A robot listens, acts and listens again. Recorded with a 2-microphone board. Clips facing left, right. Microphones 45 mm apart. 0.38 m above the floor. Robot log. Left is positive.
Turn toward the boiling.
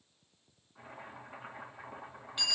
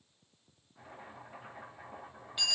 note: The boiling: about 30° left or 150° left.
cmd yaw +30
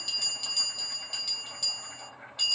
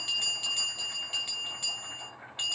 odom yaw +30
end: Facing the boiling, 1 to 2 m away.